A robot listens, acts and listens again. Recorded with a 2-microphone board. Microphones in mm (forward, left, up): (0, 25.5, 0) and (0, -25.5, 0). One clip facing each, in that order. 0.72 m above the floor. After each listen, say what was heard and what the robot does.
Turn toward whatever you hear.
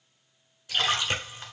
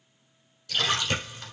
The splash: about 20° left or 160° left. Turn 20° left.
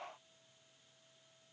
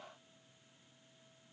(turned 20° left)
Keep listening.
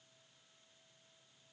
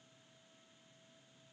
I heard a splash, but can't make it out now. It was about straight ahead or 140° left.